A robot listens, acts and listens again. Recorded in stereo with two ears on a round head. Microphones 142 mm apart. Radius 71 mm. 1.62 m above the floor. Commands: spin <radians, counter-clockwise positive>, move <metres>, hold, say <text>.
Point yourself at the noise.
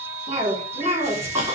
spin -0.35
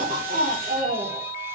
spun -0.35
spin -2.44
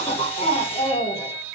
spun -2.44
spin 0.17
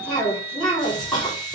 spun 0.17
say Facing the cough, over 4 m away.